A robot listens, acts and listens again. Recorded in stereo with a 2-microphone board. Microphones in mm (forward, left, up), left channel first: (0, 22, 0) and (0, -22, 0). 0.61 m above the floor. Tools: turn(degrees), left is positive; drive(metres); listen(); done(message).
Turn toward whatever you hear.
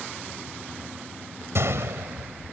turn(degrees=-90)
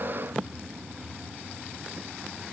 done("I heard a gunshot from this way, but can't make it out now.")